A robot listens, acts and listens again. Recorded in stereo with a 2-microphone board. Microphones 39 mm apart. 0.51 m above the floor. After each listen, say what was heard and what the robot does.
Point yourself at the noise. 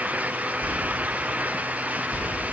The whispering: about 20° left or 160° left. Turn 20° left.
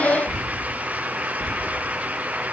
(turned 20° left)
Found it: whispering, straight ahead, 1 to 2 m away.